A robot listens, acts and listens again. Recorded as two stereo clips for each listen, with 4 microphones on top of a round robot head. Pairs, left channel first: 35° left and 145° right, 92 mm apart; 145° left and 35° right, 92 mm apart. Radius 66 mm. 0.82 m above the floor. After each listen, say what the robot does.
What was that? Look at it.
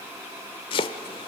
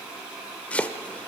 Turn 70° left.
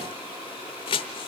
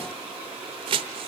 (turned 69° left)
Found it: chopping, straight ahead, under 1 m away.